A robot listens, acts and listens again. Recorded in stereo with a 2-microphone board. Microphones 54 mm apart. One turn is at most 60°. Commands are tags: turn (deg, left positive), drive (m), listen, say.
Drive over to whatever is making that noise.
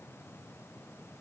<listen/>
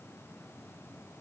<listen/>
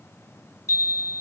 <turn deg="60"/>
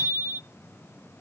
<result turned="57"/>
<turn deg="40"/>
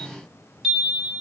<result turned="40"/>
<drive m="1.0"/>
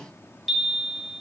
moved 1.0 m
<drive m="1.0"/>
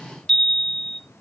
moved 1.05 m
<turn deg="10"/>
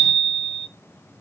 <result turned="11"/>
<drive m="1.0"/>
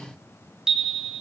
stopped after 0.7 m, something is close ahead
<turn deg="-15"/>
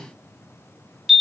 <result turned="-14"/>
<say>I am next to the chime.</say>